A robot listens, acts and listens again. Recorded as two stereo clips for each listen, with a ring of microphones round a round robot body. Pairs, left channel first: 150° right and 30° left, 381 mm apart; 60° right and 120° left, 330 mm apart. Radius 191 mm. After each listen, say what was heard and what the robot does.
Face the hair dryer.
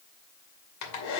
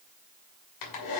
The hair dryer: 100° right. Turn 100° right.
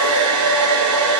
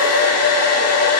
The hair dryer is now 15° right. Turn 15° right.
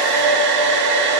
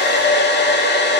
Facing the hair dryer, 2 to 4 m away.